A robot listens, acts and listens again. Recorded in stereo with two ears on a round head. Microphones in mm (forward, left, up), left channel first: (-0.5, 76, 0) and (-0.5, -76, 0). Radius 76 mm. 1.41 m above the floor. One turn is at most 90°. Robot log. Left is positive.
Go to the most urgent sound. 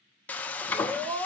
note: The scream: about 30° right or 150° right.
cmd yaw -30
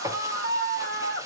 note: So it is at 120° right.
cmd yaw -90
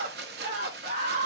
note: The scream is now 50° right.
cmd yaw -50
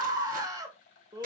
note: The scream is now 20° right.
cmd yaw -20
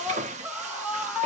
note: The scream is now 10° right.
cmd yaw -10
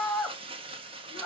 cmd fwd 1.0
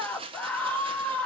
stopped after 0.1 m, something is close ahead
end: Blocked. The scream is further on, straight ahead.